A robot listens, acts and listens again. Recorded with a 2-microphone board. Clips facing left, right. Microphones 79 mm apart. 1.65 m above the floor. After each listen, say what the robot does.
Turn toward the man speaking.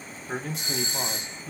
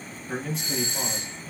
Turn 90° left.
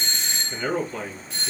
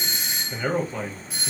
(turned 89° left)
Turn 15° right.
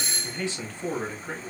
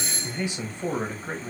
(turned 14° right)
Turn 30° right.
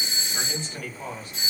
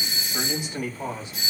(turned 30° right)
Turn 20° right.
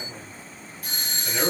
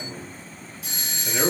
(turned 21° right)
Facing the man speaking, 1 to 2 m away.